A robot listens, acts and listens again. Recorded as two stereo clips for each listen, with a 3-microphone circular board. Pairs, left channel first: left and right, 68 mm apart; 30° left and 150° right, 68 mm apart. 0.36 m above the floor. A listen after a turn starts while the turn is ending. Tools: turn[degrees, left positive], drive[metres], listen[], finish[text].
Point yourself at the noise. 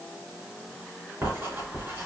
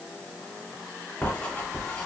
Thought: The writing: 40° right.
Action: turn[-40]
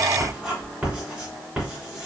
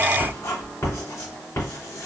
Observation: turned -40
Thought: The writing is now 20° right.
Action: turn[-20]
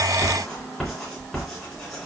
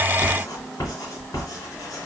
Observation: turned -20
Action: finish[Found it: writing, straight ahead, 2 to 4 m away.]